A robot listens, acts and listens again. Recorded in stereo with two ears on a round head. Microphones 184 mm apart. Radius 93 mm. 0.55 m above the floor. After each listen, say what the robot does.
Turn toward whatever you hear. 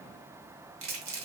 Turn 70° right.
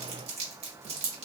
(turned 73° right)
Turn 30° right.
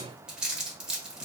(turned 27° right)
Facing the crumpling, under 1 m away.